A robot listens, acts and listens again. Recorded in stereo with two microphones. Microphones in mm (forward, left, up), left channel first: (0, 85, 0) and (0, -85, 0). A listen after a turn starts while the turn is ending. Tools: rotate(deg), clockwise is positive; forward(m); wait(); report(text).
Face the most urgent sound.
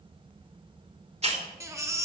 rotate(15)
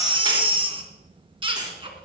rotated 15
rotate(150)
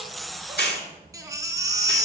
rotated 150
rotate(20)
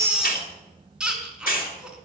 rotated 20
report("Found it: a baby crying, straight ahead.")